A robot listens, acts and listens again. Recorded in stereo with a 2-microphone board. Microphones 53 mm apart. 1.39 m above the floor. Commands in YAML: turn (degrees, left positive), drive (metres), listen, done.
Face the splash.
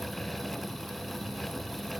listen: true
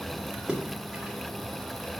turn: -15
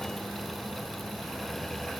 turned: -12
listen: true
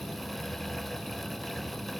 done: "I heard a splash, but can't make it out now. It was about 5° right or 150° right."